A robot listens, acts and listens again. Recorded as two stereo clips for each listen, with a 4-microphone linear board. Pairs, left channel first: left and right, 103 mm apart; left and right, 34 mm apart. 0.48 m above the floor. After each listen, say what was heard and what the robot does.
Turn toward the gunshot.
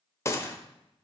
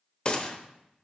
The gunshot: about 30° left or 150° left. Turn 30° left.
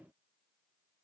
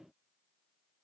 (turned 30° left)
Keep listening.
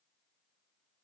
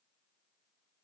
I heard a gunshot, but can't make it out now. It was about straight ahead or 120° left.